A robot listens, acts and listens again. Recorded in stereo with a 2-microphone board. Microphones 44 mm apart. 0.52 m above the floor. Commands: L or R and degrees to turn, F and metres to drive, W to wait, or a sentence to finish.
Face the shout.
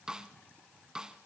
W
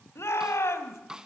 L90
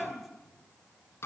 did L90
Facing the shout, 2 to 4 m away.